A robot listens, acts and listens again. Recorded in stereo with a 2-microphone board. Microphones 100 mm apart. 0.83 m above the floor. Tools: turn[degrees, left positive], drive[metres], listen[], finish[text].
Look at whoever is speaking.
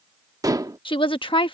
Thought: The woman speaking: about 55° left or 125° left.
Action: turn[55]
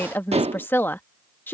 Thought: So it is at 25° left.
Action: turn[25]
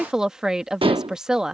Thought: The woman speaking is now 10° right.
Action: turn[-10]
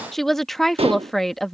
Action: finish[Facing the woman speaking.]